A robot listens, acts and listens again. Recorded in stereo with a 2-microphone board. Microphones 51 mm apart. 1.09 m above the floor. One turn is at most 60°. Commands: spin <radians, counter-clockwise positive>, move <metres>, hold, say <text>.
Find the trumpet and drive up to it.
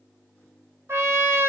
spin -0.96
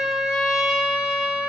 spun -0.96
move 1.0
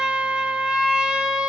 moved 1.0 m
spin -0.17
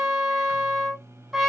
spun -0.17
move 1.0
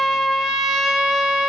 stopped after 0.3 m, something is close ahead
say I am next to the trumpet.